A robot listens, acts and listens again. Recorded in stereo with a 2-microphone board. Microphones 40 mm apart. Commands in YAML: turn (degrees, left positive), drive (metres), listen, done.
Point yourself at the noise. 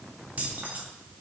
turn: -45
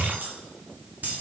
turn: -50
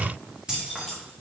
turn: -15
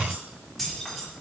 done: "Facing the keys jangling, 2 to 4 m away."